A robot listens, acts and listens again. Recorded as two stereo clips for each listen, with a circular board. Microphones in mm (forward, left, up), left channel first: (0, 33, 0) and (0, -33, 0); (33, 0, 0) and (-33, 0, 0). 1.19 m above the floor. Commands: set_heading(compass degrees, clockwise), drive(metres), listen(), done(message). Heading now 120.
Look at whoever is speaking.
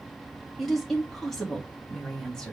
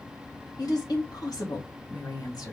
set_heading(110)
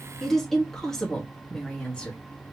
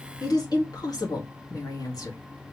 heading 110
set_heading(95)
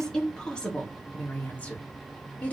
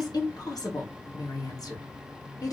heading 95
set_heading(70)
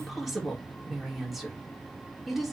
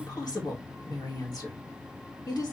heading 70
done("Found it: a woman speaking, straight ahead.")